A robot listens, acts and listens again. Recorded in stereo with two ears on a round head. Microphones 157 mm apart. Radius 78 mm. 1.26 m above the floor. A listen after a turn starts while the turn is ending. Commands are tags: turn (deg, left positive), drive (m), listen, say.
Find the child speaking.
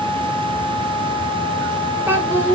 <turn deg="-30"/>
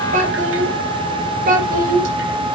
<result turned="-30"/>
<turn deg="-125"/>
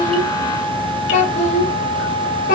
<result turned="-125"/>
<turn deg="45"/>
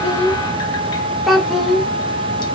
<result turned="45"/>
<say>Facing the child speaking, over 4 m away.</say>